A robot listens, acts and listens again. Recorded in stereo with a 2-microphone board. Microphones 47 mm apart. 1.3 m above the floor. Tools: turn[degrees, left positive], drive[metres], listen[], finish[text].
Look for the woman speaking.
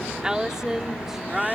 Action: turn[-30]
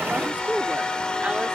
Thought: So it is at 150° right.
Action: turn[-150]
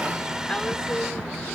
Action: listen[]
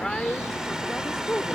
Thought: The woman speaking is now 15° left.
Action: turn[15]
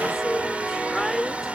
Action: finish[Found it: a woman speaking, straight ahead.]